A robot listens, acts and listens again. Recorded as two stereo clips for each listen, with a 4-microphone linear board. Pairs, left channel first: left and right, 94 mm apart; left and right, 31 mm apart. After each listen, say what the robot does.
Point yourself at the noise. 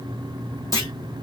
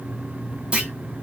Turn 40° right.
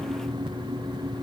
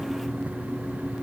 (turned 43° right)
Keep listening.
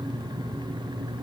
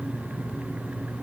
I heard a clunk, but can't make it out now. It was about 5° left or 100° right.